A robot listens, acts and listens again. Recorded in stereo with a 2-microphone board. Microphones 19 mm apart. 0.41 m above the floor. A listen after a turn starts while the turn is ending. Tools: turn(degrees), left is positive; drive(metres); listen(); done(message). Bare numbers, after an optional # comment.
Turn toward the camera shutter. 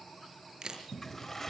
# The camera shutter: about 50° right or 130° right.
turn(-50)
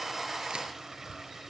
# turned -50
listen()
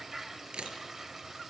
# So it is at 75° right.
turn(-75)
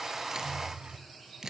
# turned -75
# The camera shutter is now 30° right.
turn(-30)
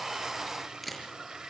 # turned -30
done("Facing the camera shutter, over 4 m away.")